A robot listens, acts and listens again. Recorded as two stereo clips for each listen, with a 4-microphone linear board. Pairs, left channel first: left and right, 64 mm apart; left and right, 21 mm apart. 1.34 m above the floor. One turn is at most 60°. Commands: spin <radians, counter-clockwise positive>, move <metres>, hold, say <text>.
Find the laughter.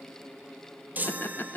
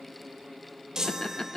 spin 0.61
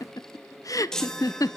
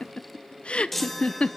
spin 1.05
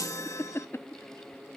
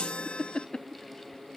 spin 0.87
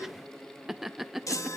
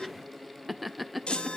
say Facing the laughter.